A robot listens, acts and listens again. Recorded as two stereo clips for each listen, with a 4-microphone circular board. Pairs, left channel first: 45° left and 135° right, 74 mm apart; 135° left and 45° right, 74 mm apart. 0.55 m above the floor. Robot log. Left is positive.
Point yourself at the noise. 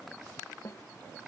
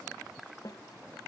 note: The snare drum: 95° left.
cmd yaw +95
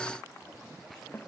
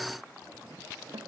note: The snare drum is now 15° right.
cmd yaw -15
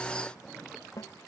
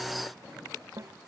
end: Found it: a snare drum, straight ahead.